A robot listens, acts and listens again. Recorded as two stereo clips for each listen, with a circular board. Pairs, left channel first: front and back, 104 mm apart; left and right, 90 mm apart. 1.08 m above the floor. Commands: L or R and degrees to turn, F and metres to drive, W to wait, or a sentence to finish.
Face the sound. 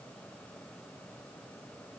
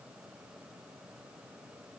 W
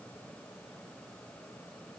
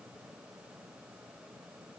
W
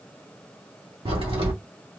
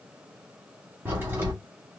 R155
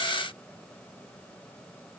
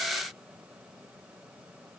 Facing where the crack came from. I can't hear it now.